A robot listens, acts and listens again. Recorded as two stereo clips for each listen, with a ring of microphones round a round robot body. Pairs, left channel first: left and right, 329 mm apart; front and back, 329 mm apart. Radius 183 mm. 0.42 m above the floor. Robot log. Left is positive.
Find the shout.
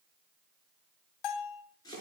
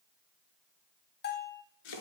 cmd idle
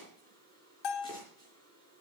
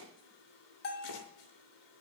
cmd idle
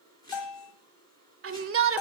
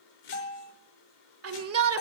note: The shout: 135° right.
cmd yaw -135
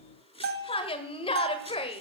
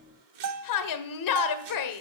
note: The shout is now 15° left.
cmd yaw +15
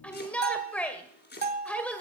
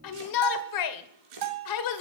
end: Found it: a shout, straight ahead, 1 to 2 m away.